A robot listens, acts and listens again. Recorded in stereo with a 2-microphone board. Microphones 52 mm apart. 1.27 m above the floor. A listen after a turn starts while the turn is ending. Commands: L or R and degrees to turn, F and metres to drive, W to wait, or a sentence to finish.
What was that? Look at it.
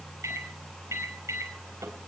R65
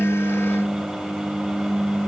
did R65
Found it: a microwave, straight ahead.